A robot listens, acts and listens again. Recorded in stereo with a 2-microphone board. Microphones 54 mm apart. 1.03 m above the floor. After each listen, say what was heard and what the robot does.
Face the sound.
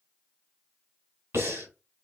The breathing: about 65° right or 115° right. Turn 65° right.
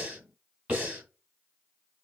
So it is at 25° right. Turn 25° right.
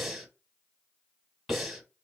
Facing the breathing.